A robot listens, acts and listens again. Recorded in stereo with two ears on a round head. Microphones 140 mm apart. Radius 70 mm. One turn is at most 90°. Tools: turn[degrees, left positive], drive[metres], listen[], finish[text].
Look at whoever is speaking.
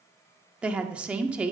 Action: turn[-30]
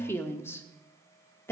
Thought: So it is at 20° left.
Action: turn[20]
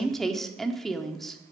Action: finish[Facing the woman speaking.]